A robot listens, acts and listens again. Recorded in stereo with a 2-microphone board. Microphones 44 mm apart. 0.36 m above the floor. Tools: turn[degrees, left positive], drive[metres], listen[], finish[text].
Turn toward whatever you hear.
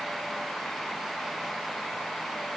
Action: listen[]
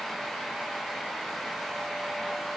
Action: listen[]
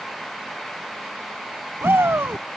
Thought: The shout: about 65° right or 115° right.
Action: turn[-65]
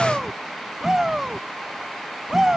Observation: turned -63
Thought: So it is at 15° right.
Action: turn[-15]
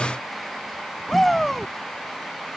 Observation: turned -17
Action: finish[Found it: a shout, straight ahead.]